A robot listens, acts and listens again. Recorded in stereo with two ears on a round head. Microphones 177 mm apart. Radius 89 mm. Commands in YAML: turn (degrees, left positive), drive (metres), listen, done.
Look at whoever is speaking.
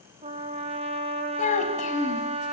turn: 35
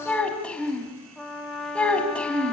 done: "Found it: a child speaking, straight ahead."